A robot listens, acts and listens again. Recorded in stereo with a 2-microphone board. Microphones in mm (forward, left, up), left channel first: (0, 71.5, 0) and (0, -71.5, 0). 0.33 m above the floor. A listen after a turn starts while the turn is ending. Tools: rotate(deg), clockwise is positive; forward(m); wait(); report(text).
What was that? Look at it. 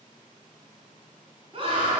rotate(40)
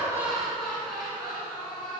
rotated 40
report("Facing the laughter, over 4 m away.")